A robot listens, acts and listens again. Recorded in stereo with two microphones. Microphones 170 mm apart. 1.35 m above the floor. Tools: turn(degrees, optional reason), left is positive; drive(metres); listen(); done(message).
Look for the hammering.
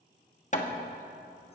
turn(degrees=40, reason="The hammering: about 40° left or 140° left.")
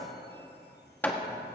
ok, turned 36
turn(degrees=10, reason="So it is at 10° left.")
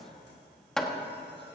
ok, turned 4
done("Found it: hammering, straight ahead.")